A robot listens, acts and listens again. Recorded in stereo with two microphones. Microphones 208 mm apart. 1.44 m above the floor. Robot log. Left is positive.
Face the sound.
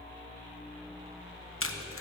cmd yaw +90
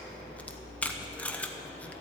end: Facing the tape being pulled.